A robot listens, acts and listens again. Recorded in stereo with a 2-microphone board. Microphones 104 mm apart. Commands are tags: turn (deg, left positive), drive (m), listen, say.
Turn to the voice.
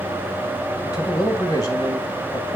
<turn deg="35"/>
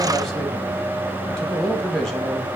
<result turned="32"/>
<say>Found it: a man speaking, straight ahead.</say>